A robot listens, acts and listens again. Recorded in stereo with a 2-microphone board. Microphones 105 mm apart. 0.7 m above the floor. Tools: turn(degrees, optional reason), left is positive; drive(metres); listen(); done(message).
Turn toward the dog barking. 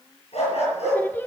turn(degrees=90)
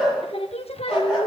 done("Facing the dog barking.")